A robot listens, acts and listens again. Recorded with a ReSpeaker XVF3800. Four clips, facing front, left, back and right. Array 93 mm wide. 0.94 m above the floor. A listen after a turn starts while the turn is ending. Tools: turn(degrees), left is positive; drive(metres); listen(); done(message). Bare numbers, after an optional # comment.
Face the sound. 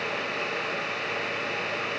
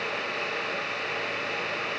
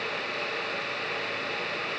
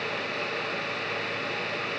listen()
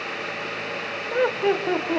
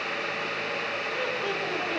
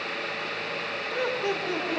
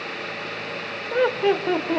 # The laughter: 55° right.
turn(-55)
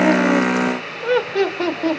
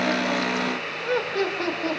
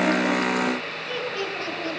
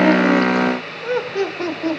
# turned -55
# The laughter is now 10° right.
turn(-10)
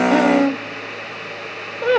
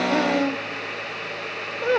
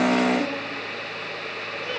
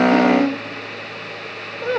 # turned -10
done("Facing the laughter, 2 to 4 m away.")